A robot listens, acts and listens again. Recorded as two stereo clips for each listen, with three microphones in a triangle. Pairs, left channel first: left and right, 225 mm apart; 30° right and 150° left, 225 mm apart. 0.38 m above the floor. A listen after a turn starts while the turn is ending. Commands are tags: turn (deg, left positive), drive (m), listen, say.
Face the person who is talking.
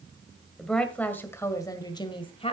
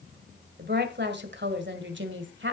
<turn deg="145"/>
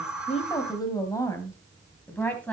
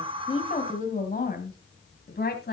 <say>Facing the woman speaking.</say>